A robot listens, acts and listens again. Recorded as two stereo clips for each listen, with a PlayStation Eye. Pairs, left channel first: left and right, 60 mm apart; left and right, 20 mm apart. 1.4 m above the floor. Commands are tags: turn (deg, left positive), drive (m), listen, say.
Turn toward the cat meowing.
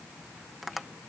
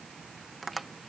<listen/>
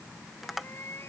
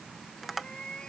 <turn deg="45"/>
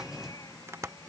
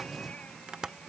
<listen/>
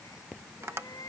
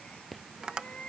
<turn deg="90"/>
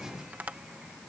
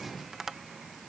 <listen/>
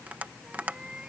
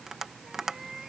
<turn deg="-15"/>
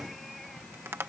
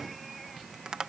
<listen/>
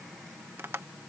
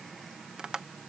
<listen/>
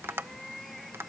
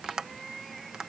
<say>Facing the cat meowing.</say>